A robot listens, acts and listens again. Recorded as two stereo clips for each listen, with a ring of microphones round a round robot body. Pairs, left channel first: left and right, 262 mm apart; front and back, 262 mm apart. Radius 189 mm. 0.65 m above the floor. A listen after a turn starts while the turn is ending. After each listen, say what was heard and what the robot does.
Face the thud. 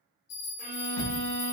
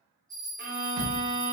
The thud: 150° left. Turn 150° left.
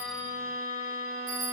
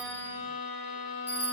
Facing where the thud came from. I can't hear it now.